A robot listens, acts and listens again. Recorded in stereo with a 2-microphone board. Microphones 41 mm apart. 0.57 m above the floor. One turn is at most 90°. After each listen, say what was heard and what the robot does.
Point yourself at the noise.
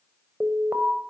The alarm: about 75° right or 105° right. Turn 75° right.
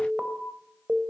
So it is at 25° right. Turn 25° right.
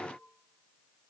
Keep listening.
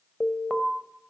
Found it: an alarm, straight ahead.